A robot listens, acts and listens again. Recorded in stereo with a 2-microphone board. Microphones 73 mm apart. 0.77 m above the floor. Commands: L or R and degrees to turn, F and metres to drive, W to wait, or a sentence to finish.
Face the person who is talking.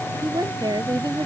R90
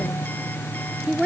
R10
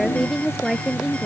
Facing the woman speaking.